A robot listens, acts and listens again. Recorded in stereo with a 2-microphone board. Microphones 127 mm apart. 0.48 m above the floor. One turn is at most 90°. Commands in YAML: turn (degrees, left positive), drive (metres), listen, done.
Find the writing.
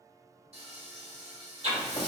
turn: -55
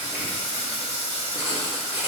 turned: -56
turn: -25
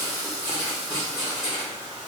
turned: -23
done: "Found it: writing, straight ahead, 1 to 2 m away."